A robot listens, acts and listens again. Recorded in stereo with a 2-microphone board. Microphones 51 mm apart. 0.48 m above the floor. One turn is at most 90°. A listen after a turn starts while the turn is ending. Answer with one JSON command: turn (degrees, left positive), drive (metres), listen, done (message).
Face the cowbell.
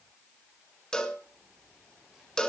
{"turn": 30}
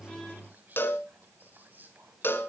{"turn": 90}
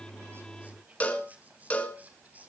{"turn": 30}
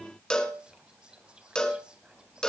{"turn": 15}
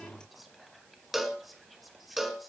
{"done": "Found it: a cowbell, straight ahead, 1 to 2 m away."}